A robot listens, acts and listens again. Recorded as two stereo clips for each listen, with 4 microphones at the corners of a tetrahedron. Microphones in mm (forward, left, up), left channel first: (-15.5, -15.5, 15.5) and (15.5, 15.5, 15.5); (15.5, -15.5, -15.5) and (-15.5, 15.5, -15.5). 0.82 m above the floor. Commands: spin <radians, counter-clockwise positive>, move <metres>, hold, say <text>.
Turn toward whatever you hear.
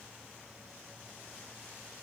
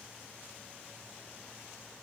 hold
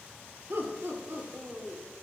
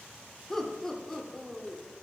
spin 0.70
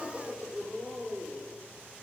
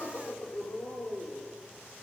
spin -0.17
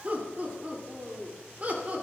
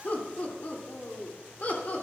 say Facing the laughter.